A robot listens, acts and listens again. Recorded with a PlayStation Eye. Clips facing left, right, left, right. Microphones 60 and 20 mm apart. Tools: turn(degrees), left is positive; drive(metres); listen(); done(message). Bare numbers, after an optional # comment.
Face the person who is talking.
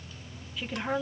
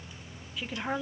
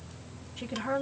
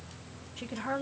turn(-30)
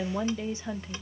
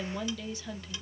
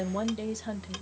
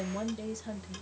# So it is at 25° left.
turn(25)
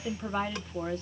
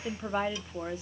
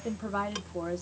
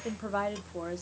# The woman speaking is now 10° right.
turn(-10)
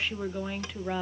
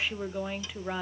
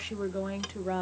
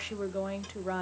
done("Found it: a woman speaking, straight ahead, under 1 m away.")